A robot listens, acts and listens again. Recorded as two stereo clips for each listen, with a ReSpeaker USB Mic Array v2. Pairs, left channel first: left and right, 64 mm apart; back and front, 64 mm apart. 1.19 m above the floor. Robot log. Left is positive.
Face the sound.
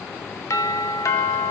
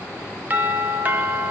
note: The doorbell: 60° left.
cmd yaw +60
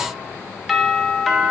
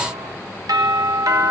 end: Facing the doorbell, 2 to 4 m away.